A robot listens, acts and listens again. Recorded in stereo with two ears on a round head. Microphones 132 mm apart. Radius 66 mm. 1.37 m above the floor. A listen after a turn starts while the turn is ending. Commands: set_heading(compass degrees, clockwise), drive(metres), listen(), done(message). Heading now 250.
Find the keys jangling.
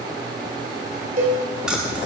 set_heading(280)
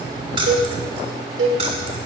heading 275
listen()
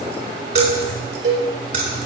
set_heading(40)
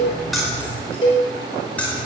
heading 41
set_heading(31)
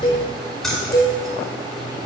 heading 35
done("Found it: keys jangling, straight ahead.")